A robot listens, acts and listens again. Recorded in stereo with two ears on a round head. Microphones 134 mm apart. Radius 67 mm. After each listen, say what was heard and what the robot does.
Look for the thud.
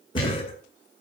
The thud: about 30° left or 150° left. Turn 30° left.
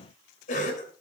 Keep listening.
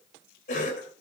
I heard a thud, but can't make it out now. It was about straight ahead or 120° left.